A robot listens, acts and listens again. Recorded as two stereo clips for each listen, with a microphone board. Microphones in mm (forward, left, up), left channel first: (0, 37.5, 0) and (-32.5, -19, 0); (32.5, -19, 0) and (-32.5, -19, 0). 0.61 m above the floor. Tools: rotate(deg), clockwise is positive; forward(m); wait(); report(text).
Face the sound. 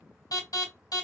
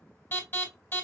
rotate(-55)
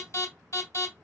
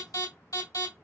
rotate(-20)
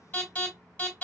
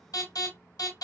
rotate(10)
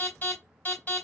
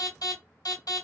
report("Found it: an alarm, straight ahead, 2 to 4 m away.")